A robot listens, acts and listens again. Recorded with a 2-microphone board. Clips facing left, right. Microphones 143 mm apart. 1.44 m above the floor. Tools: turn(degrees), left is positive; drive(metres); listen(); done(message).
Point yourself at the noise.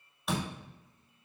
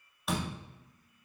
turn(degrees=30)
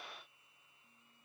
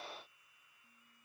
listen()
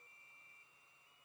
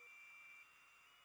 done("I heard a door slam, but can't make it out now. It was about 30° right or 150° left.")